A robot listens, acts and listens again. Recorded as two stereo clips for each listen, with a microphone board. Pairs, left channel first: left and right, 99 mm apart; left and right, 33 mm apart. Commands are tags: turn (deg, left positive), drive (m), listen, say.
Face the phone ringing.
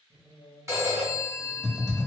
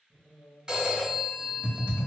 <turn deg="-30"/>
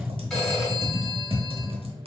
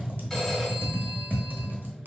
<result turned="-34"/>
<say>Found it: a phone ringing, straight ahead, 1 to 2 m away.</say>